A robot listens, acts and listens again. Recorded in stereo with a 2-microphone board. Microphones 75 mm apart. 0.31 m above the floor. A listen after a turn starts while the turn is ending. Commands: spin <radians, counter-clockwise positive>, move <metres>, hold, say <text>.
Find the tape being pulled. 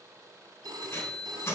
spin 0.52
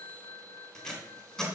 say Found it: tape being pulled, straight ahead.